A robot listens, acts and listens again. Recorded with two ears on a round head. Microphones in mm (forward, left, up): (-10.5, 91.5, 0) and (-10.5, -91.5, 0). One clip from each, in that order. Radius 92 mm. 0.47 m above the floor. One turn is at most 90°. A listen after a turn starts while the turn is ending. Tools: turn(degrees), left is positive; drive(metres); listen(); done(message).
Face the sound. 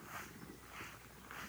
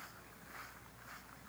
listen()
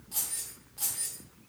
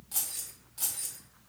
turn(degrees=-30)
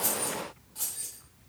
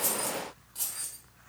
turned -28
turn(degrees=-25)
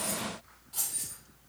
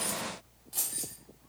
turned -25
turn(degrees=-90)
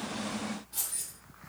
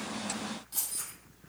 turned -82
turn(degrees=-65)
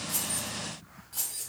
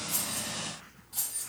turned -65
done("Facing the keys jangling.")